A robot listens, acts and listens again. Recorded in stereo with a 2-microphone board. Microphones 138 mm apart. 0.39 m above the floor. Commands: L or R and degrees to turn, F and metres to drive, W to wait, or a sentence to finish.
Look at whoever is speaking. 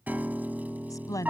L25
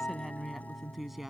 Facing the woman speaking.